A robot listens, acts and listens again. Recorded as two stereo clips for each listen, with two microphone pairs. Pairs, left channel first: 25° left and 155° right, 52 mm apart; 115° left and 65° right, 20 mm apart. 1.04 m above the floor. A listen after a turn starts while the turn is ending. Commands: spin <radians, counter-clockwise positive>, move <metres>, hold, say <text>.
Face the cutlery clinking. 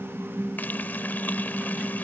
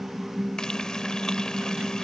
hold
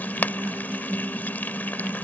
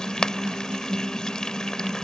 hold
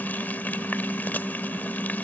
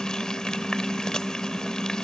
say I can't make out cutlery clinking, only frying.